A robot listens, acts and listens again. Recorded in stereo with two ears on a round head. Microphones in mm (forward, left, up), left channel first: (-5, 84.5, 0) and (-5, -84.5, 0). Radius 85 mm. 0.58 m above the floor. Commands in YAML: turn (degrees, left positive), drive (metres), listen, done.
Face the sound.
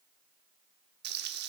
turn: -55
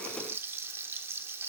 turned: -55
turn: -15
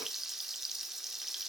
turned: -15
done: "Facing the frying."